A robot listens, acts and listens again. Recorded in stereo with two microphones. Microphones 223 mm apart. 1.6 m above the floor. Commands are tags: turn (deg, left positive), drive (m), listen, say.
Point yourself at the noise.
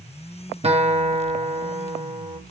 <turn deg="-25"/>
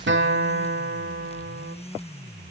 <turn deg="-125"/>
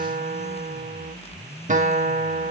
<turn deg="-35"/>
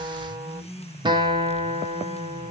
<turn deg="-20"/>
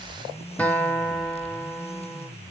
<say>Found it: a guitar, straight ahead.</say>